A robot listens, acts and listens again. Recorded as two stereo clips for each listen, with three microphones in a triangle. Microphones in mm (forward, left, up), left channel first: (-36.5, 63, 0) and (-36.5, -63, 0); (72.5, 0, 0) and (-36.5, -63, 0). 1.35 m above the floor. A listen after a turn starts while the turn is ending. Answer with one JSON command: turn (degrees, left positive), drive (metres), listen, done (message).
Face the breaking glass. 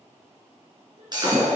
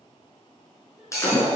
{"turn": -35}
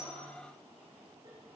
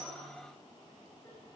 {"done": "Facing where the breaking glass came from. I can't hear it now."}